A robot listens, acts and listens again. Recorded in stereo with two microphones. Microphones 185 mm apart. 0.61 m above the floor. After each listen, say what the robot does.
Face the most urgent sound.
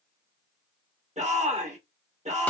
Turn 40° right.
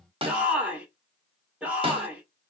Turn 10° right.
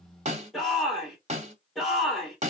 Facing the shout.